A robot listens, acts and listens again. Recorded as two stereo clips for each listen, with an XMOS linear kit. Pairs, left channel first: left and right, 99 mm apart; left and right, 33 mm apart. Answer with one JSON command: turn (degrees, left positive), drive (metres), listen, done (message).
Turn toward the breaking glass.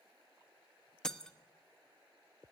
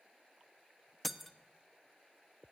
{"turn": 30}
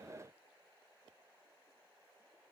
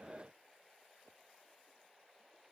{"listen": true}
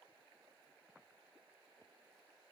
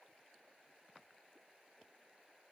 {"done": "I heard breaking glass, but can't make it out now. It was about 25° right or 145° left."}